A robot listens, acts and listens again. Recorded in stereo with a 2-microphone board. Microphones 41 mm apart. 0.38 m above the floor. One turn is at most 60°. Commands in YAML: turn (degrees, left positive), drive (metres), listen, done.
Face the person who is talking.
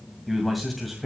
turn: 30
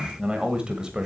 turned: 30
turn: -20
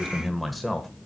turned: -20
done: "Facing the man speaking, 1 to 2 m away."